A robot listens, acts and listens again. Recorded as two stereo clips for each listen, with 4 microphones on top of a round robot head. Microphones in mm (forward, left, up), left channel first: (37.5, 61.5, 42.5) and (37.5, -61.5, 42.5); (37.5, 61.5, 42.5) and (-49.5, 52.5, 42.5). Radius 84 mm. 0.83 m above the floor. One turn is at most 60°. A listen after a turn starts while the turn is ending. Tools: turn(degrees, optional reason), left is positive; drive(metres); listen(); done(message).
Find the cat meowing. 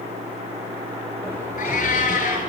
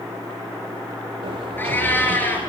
turn(degrees=60, reason="The cat meowing: 75° left.")
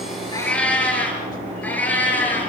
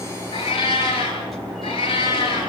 turn(degrees=15, reason="The cat meowing is now 15° left.")
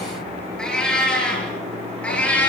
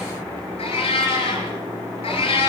turn(degrees=10, reason="The cat meowing is now 10° left.")
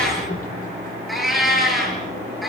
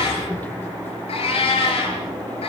done("Found it: a cat meowing, straight ahead.")